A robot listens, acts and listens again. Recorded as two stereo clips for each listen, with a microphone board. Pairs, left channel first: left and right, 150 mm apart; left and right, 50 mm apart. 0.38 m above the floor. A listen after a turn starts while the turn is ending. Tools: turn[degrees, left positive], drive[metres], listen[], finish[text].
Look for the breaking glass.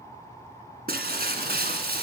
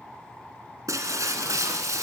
Action: turn[-90]
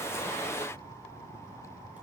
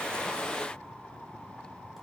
Action: finish[Facing where the breaking glass came from. I can't hear it now.]